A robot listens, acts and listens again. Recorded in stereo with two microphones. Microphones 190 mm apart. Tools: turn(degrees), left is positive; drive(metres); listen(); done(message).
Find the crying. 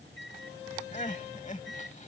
turn(degrees=40)
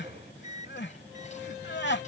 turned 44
turn(degrees=95)
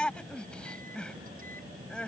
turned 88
done("Found it: crying, straight ahead.")